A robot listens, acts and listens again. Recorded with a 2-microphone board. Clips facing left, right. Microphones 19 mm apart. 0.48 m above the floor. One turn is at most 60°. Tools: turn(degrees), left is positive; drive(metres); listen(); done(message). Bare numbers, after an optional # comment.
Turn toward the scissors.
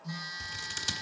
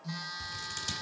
# The scissors: about 20° left or 160° left.
turn(20)
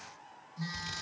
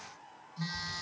listen()
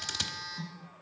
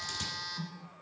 # So it is at 140° left.
turn(60)
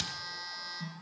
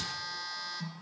# Nothing new. It was at 80° left.
turn(60)
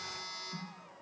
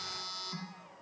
# Nothing new. It was at 20° left.
turn(20)
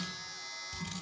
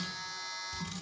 # The scissors is now 15° left.
turn(15)
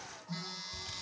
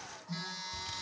done("Found it: scissors, straight ahead.")